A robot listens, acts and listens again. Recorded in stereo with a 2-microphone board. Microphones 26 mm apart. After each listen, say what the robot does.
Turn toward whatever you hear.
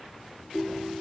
Turn 55° right.
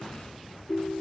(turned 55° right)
Found it: a ringtone, straight ahead, 2 to 4 m away.